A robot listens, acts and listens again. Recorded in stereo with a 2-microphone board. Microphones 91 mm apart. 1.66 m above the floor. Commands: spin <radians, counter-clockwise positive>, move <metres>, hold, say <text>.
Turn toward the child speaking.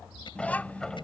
spin 0.26
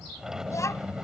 spin 0.52
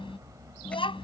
spin 2.01
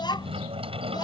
spin 0.87
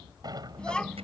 spin 0.17
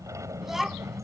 say Found it: a child speaking, straight ahead.